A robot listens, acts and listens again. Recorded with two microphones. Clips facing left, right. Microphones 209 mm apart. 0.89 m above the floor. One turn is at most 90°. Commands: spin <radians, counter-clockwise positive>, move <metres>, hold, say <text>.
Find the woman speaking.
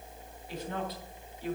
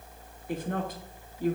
spin -0.79
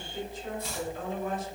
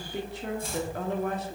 spin -1.57
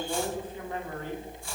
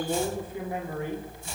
spin -0.26
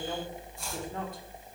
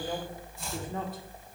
say Facing the woman speaking, 2 to 4 m away.